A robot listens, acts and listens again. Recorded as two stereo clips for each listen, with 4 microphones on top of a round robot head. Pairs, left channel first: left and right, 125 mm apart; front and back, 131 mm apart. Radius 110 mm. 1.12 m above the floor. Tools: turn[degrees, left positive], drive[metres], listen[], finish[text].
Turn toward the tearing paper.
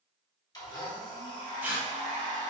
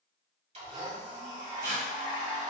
Thought: The tearing paper: 165° right.
Action: turn[-165]
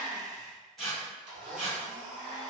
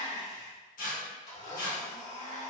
Action: finish[Found it: tearing paper, straight ahead, 1 to 2 m away.]